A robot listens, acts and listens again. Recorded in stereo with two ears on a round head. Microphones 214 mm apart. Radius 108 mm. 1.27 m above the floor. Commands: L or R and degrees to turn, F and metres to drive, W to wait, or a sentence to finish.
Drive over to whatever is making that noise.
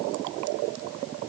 W
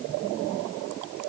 W
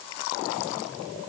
I can't make out anything.